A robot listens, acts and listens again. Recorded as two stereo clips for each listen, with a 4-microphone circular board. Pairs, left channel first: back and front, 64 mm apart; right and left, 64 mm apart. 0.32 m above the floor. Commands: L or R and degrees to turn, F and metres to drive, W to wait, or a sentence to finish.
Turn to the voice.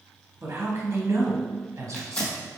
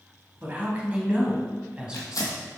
L15
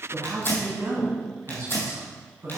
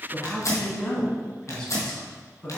R20
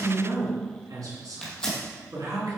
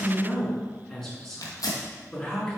R10
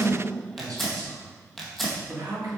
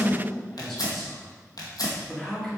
Facing the man speaking.